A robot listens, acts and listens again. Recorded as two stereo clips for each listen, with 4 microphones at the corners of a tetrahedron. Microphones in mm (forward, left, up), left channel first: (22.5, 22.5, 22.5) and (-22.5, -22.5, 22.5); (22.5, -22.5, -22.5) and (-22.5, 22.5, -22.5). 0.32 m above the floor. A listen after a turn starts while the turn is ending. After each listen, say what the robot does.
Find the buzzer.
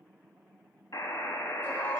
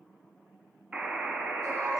Turn 60° left.
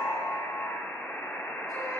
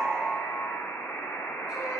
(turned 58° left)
Facing the buzzer.